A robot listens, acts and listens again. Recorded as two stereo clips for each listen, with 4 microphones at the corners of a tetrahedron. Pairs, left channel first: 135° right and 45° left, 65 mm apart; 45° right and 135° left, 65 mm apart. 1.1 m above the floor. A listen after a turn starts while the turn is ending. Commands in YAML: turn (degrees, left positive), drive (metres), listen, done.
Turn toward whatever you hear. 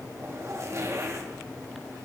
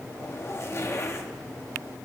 done: "Facing the zipper, 1 to 2 m away."